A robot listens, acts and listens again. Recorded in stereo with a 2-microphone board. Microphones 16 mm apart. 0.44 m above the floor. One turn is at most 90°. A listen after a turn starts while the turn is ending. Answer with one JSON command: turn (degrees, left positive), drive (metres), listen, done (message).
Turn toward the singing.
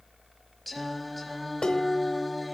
{"turn": 30}
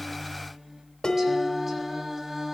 {"turn": -25}
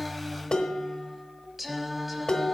{"turn": -10}
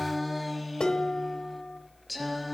{"done": "Facing the singing, 1 to 2 m away."}